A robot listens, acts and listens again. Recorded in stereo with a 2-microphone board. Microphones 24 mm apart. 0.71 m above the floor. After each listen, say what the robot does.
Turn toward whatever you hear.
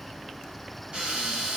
Turn 45° right.
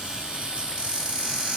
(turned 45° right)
Turn 75° right.
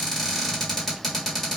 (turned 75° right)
Found it: a cupboard door, straight ahead, 1 to 2 m away.